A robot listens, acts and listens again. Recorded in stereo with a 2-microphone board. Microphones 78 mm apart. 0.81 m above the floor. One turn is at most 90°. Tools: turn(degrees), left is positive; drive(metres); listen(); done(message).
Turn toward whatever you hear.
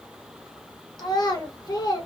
turn(degrees=60)
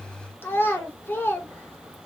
turn(degrees=35)
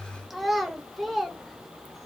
done("Found it: a child speaking, straight ahead.")